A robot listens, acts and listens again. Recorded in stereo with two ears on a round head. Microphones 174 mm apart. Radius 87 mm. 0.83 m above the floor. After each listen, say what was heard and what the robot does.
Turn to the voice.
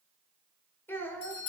Turn 30° left.
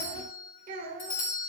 So it is at 45° right. Turn 45° right.
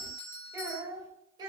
The child speaking is now 25° right. Turn 25° right.
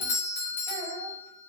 The child speaking is now 20° right. Turn 20° right.
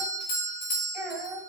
Facing the child speaking, 2 to 4 m away.